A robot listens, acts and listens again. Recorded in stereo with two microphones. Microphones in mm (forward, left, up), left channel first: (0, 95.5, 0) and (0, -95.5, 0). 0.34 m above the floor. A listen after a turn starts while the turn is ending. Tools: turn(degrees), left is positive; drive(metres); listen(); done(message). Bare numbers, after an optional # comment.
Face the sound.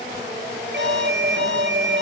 # The alarm: about 70° right or 110° right.
turn(-70)
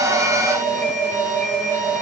# So it is at 40° right.
turn(-40)
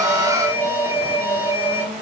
# The alarm is now 10° right.
turn(-10)
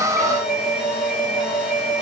done("Facing the alarm, over 4 m away.")